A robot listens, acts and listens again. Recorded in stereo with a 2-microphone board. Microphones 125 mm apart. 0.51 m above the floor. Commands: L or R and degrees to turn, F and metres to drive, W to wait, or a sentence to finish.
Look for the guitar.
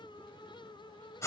W
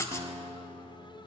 R45
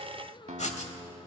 R90
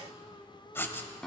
Found it: a guitar, straight ahead, under 1 m away.